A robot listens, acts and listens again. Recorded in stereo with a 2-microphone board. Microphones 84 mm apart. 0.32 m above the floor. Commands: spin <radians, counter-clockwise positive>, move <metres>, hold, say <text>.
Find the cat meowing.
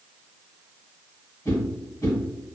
hold
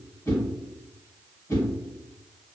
hold
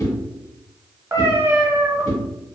spin -0.52
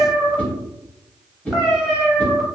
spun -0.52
say Facing the cat meowing, under 1 m away.